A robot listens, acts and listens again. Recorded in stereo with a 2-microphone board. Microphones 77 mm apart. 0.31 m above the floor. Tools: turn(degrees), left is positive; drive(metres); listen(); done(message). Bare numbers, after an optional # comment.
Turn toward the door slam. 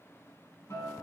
listen()
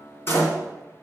# The door slam: about 35° left or 145° left.
turn(35)
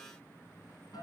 listen()
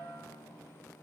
done("I heard a door slam, but can't make it out now. It was about straight ahead or 110° left.")